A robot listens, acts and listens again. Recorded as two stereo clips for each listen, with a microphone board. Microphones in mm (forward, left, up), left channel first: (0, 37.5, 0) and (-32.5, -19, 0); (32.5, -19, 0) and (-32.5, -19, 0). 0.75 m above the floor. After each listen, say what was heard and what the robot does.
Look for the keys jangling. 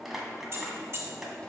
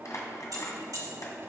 The keys jangling: 165° right. Turn 165° right.
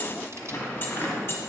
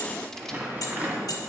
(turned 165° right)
The keys jangling is now 10° left. Turn 10° left.
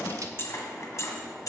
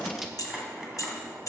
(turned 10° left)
The keys jangling is now 35° left. Turn 35° left.
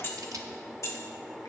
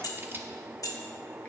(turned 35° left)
The keys jangling is now 25° left. Turn 25° left.
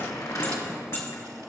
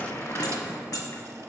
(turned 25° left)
The keys jangling is now 10° left. Turn 10° left.
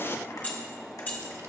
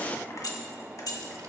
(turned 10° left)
Facing the keys jangling, 1 to 2 m away.